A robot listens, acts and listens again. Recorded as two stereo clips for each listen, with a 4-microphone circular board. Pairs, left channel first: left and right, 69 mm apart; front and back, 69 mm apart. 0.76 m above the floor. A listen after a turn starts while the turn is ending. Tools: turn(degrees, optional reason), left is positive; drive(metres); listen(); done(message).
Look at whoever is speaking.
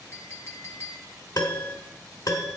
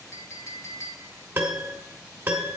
listen()
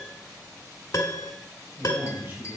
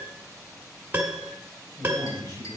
turn(degrees=-35, reason="The man speaking: 35° right.")
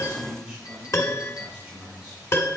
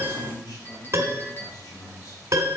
turn(degrees=-15, reason="The man speaking is now 15° right.")
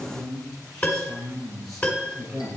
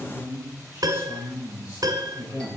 done("Found it: a man speaking, straight ahead.")